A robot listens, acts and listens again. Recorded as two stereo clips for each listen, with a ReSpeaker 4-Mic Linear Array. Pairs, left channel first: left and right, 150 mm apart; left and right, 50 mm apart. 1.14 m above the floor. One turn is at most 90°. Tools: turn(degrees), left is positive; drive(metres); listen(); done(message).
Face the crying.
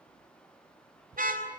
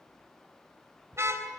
listen()
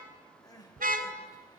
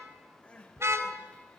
turn(degrees=25)
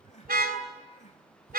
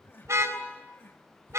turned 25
turn(degrees=90)
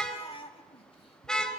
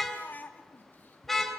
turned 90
turn(degrees=40)
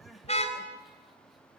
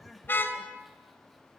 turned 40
done("Found it: crying, straight ahead.")